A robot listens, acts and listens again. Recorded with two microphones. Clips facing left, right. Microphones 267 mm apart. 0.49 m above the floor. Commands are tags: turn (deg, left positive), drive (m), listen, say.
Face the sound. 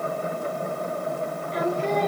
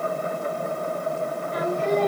<turn deg="-55"/>
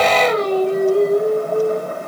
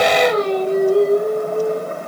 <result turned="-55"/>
<turn deg="-75"/>
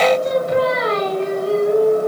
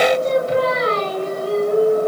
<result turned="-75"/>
<turn deg="-40"/>
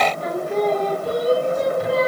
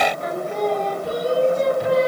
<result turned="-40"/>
<say>Facing the singing, 2 to 4 m away.</say>